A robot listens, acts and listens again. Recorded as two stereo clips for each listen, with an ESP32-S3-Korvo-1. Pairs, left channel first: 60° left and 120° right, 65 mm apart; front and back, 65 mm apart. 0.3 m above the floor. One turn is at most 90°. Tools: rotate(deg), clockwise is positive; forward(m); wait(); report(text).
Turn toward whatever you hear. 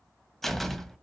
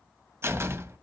rotate(-90)
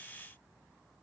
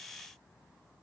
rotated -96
rotate(-50)
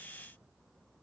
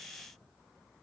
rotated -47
report("I heard a door slam from this way, but can't make it out now.")